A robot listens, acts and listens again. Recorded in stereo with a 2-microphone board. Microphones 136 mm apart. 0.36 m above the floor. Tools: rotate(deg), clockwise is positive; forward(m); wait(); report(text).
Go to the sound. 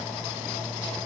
wait()
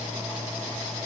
wait()
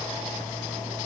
report("I can't make out anything.")